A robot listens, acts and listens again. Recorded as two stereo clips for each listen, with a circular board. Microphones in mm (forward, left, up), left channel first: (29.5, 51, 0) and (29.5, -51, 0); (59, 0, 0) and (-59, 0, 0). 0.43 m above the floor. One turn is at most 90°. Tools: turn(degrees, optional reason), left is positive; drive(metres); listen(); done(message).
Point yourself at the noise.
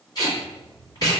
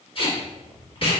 turn(degrees=40, reason="The tape being pulled: 40° left.")
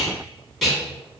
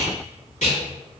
done("Found it: tape being pulled, straight ahead, 1 to 2 m away.")